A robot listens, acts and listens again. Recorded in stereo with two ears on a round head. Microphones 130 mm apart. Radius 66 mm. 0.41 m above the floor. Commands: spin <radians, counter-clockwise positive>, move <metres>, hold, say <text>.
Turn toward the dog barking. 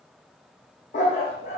spin 0.87
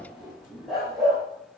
say Facing the dog barking.